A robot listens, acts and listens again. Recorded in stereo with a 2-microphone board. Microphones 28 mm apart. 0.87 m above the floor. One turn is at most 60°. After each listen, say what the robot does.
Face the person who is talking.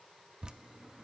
Keep listening.
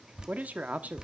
Turn 60° right.
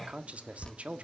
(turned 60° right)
Turn 50° right.
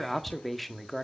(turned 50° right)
Found it: a man speaking, straight ahead.